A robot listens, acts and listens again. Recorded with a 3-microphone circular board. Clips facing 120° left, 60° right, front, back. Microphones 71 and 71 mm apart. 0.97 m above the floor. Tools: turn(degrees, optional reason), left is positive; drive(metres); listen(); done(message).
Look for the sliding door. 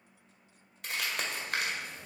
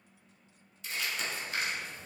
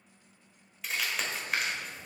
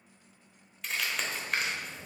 turn(degrees=175, reason="The sliding door: 175° left.")
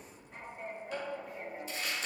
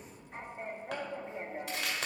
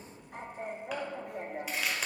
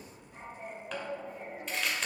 done("Facing the sliding door.")